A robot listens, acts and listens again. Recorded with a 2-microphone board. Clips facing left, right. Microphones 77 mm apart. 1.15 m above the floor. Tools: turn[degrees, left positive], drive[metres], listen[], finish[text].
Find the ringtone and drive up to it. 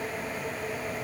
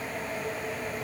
Action: listen[]
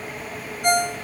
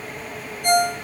Action: turn[90]
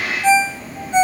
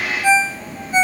Action: drive[1.0]
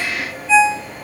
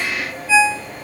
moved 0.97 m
Thought: The ringtone is now 10° right.
Action: turn[-10]
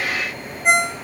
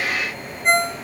Action: drive[1.0]
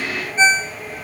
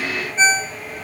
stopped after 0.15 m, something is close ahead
Thought: The ringtone is now 10° left.
Action: turn[10]
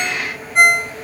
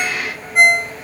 Action: finish[Arrived at the ringtone, straight ahead.]